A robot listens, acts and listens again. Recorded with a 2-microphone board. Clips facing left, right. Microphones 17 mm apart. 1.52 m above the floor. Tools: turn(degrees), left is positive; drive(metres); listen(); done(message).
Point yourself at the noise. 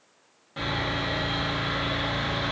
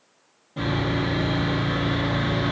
turn(degrees=50)
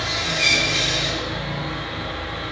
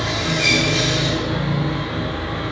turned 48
turn(degrees=10)
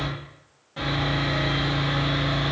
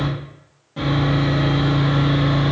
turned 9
done("Found it: sawing, straight ahead.")